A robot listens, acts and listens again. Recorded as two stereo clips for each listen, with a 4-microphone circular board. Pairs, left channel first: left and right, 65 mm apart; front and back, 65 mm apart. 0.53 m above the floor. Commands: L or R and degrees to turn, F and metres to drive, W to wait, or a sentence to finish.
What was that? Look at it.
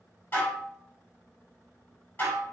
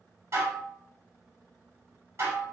L145
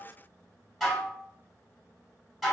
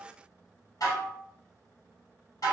Found it: dishes clattering, straight ahead, 1 to 2 m away.